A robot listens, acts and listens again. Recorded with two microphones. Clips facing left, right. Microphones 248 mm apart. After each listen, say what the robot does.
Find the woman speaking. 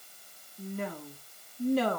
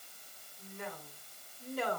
Turn 90° left.
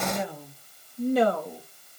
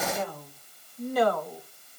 Turn 30° left.
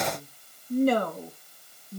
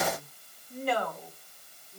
Turn 60° left.
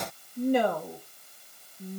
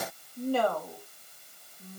Turn 15° left.
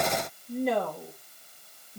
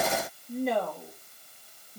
Facing the woman speaking.